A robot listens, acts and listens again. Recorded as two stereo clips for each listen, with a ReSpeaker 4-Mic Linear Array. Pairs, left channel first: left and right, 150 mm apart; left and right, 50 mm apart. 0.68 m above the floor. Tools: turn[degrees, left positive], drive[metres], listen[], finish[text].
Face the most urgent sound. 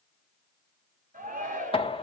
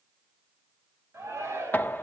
Thought: The shout: about 60° right or 120° right.
Action: turn[-60]
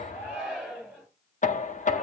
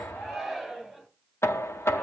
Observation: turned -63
Action: finish[Found it: a shout, straight ahead.]